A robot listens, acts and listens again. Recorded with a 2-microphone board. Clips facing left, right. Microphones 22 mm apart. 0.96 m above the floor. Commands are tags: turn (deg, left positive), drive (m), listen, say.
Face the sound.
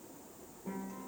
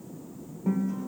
<turn deg="-70"/>
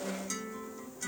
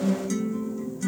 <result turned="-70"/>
<say>Found it: a guitar, straight ahead.</say>